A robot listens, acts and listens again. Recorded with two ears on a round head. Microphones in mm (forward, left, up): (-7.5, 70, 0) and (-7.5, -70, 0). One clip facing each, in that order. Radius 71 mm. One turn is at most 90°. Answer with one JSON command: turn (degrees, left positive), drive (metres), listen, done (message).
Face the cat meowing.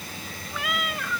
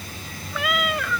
{"turn": -60}
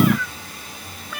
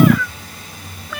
{"turn": -60}
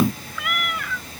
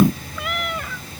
{"turn": -25}
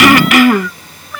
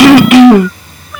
{"done": "Found it: a cat meowing, straight ahead."}